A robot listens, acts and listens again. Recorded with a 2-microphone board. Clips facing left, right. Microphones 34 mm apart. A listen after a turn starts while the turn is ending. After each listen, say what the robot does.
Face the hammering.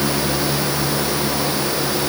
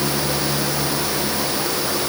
Keep listening.
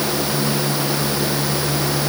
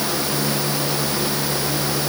Keep listening.
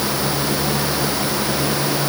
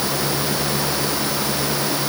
I can't make out hammering to turn to.